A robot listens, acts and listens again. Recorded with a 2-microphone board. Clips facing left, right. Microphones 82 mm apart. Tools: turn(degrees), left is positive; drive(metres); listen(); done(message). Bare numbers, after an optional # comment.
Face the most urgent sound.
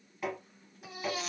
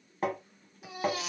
turn(30)
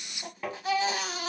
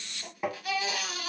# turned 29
# So it is at 150° left.
turn(150)
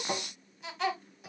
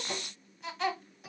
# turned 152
done("Found it: a baby crying, straight ahead, 1 to 2 m away.")